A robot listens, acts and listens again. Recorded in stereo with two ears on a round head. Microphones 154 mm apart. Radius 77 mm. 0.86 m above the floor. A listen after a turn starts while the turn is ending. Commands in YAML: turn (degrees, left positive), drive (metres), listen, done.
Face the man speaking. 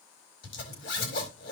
listen: true
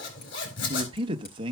turn: -30
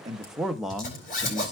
done: "Facing the man speaking."